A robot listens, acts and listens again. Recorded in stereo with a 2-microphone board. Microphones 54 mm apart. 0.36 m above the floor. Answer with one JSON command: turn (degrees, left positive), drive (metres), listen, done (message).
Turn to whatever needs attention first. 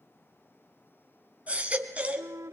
{"turn": -25}
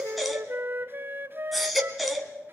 {"done": "Facing the baby crying."}